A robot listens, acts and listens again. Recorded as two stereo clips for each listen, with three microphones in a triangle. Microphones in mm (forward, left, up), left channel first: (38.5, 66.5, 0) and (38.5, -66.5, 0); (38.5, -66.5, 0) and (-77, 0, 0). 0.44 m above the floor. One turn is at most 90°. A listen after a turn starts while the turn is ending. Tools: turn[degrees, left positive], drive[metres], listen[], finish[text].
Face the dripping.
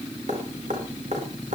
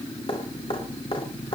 Thought: The dripping: 75° right.
Action: turn[-75]
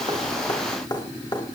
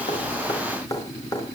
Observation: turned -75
Thought: The dripping is now 35° left.
Action: turn[35]
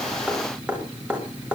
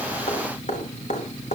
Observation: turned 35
Thought: The dripping is now 10° right.
Action: turn[-10]
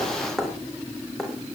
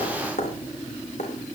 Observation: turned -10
Action: finish[Found it: dripping, straight ahead.]